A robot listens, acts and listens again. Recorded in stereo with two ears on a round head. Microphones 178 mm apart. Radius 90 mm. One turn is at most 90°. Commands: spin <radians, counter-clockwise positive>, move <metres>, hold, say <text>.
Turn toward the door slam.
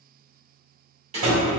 spin -0.61
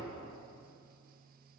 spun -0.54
hold
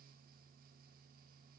say I heard a door slam, but can't make it out now. It was about 5° right or 115° right.